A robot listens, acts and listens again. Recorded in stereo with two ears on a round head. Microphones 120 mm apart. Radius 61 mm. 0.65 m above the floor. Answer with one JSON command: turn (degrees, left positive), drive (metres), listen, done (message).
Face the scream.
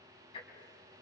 {"listen": true}
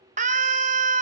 {"turn": -65}
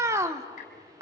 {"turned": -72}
{"turn": -25}
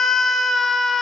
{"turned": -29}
{"done": "Found it: a scream, straight ahead, 1 to 2 m away."}